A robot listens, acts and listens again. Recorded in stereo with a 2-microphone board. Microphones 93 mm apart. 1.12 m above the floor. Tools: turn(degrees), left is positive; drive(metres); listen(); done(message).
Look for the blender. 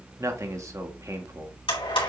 turn(degrees=65)
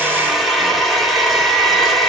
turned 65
done("Facing the blender, 2 to 4 m away.")